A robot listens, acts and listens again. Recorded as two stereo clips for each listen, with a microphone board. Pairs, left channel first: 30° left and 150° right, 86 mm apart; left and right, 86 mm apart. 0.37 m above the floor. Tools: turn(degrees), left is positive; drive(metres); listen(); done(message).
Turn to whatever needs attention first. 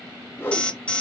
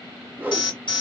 turn(degrees=105)
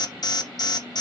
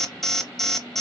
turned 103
done("Found it: an alarm, straight ahead, 1 to 2 m away.")